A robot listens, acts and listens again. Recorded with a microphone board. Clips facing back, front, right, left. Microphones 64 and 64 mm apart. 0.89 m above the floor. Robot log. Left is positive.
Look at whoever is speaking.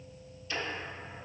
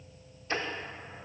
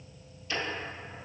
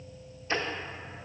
cmd idle
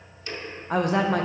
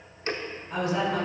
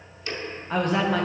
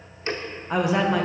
note: The woman speaking: 170° left.
cmd yaw +170
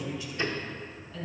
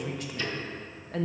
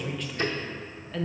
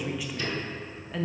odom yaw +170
note: The woman speaking is now 10° left.
cmd yaw +10
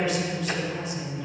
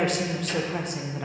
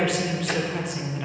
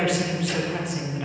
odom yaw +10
end: Found it: a woman speaking, straight ahead.